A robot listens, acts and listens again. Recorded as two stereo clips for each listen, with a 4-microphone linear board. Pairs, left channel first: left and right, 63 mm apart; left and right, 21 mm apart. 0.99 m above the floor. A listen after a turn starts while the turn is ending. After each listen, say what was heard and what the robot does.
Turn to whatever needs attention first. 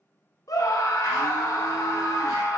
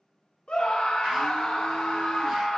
The scream: about 65° left or 115° left. Turn 65° left.
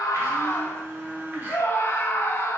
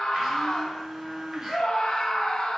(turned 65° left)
So it is at 40° left. Turn 40° left.
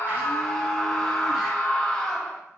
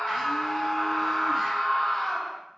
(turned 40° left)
The scream is now 15° left. Turn 15° left.
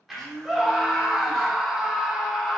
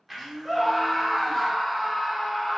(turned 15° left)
Facing the scream.